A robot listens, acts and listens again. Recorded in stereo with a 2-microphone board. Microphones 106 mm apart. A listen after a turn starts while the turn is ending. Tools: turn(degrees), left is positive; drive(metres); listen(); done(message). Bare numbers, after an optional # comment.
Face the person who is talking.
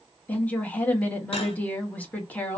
turn(30)
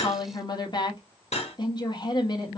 # So it is at 135° left.
turn(135)
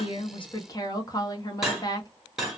# The woman speaking is now 40° left.
turn(40)
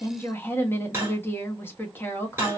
# The woman speaking is now 20° left.
turn(20)
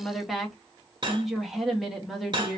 done("Facing the woman speaking, 1 to 2 m away.")